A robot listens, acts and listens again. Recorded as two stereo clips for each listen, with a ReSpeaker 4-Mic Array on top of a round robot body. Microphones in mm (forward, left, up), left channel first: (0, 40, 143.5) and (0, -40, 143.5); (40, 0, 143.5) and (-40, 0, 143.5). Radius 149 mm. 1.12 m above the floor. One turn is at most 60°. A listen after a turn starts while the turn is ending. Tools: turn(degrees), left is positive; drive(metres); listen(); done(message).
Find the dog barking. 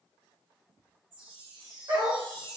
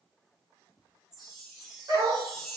turn(degrees=-60)
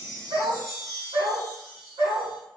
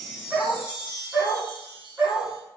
turn(degrees=-60)
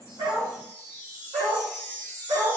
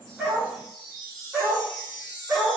turn(degrees=-60)
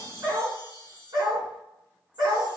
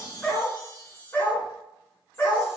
turn(degrees=-55)
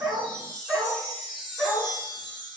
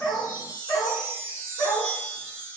done("Facing the dog barking, 1 to 2 m away.")